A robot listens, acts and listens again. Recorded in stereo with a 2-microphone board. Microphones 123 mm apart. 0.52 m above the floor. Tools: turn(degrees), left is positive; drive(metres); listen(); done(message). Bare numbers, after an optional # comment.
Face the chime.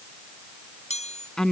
# The chime: about 60° left or 120° left.
turn(60)
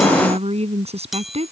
done("Found it: a chime, straight ahead.")